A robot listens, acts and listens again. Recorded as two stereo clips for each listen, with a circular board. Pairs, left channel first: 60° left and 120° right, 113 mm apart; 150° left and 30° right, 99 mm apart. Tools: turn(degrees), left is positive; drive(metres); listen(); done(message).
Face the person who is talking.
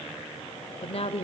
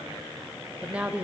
turn(degrees=45)
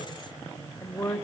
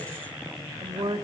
done("Found it: a woman speaking, straight ahead.")